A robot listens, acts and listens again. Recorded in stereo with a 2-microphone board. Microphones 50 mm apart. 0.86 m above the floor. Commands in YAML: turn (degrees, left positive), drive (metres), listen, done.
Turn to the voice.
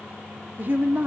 turn: -40
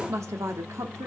turn: -100
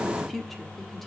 done: "Found it: a woman speaking, straight ahead."